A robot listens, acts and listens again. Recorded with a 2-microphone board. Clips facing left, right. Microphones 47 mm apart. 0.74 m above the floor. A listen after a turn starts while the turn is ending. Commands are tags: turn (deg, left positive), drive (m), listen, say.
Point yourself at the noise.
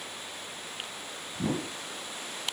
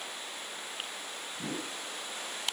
<turn deg="90"/>
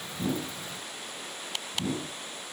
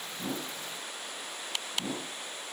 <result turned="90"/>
<turn deg="-10"/>
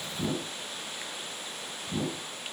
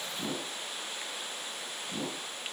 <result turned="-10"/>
<say>Found it: a whoosh, straight ahead, 2 to 4 m away.</say>